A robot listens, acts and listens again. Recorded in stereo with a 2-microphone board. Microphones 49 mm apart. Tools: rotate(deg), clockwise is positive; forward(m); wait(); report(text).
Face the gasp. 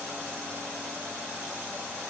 wait()
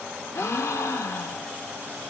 rotate(-75)
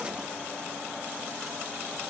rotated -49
wait()
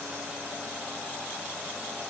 report("I heard a gasp, but can't make it out now. It was about 25° left or 60° left.")